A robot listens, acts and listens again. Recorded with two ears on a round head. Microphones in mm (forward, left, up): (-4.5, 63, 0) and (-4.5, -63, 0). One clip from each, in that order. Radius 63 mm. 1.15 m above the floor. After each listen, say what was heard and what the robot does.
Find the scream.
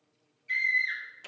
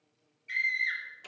Turn 30° right.
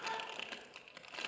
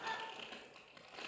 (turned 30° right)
So it is at 140° right. Turn 140° right.
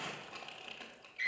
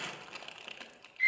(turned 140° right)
The scream is now 30° left. Turn 30° left.
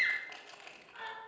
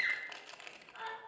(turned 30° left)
The scream is now 25° left. Turn 25° left.
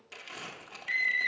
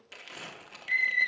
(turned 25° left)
Facing the scream.